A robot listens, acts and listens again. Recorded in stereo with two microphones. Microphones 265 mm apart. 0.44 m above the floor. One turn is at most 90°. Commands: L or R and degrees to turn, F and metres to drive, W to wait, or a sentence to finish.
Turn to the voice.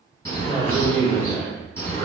L30
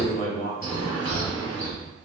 L90
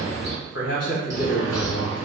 L90
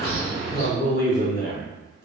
L45
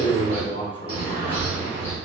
L20
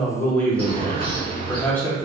Facing the man speaking, 1 to 2 m away.